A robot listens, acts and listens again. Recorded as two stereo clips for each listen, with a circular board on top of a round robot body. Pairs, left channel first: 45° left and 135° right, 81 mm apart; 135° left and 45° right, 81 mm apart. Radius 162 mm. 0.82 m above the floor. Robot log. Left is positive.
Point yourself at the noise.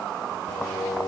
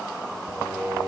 note: The singing: 35° left.
cmd yaw +35
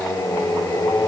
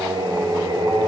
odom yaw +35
note: The singing is now 15° right.
cmd yaw -15
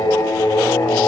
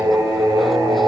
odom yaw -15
end: Found it: singing, straight ahead, 1 to 2 m away.